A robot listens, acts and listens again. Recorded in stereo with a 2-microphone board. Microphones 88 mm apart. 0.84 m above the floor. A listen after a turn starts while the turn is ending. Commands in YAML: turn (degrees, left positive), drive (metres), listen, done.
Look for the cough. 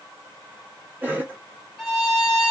turn: -20
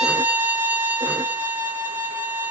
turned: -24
listen: true
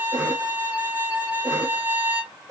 turn: -130
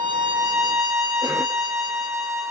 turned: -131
listen: true
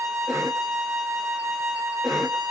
done: "Found it: a cough, straight ahead, 1 to 2 m away."